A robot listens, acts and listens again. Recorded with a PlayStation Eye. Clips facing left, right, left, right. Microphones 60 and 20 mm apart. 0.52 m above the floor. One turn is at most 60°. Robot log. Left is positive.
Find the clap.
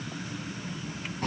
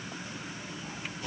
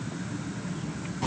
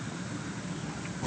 cmd idle
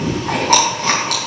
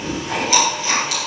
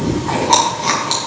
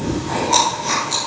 cmd idle
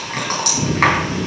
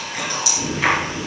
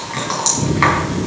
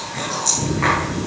end: I can't make out a clap to turn to.